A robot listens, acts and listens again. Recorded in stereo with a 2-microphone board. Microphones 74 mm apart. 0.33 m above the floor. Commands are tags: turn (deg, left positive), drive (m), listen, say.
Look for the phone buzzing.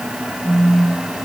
<turn deg="55"/>
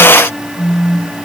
<turn deg="65"/>
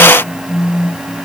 <turn deg="10"/>
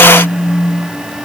<say>Facing the phone buzzing, over 4 m away.</say>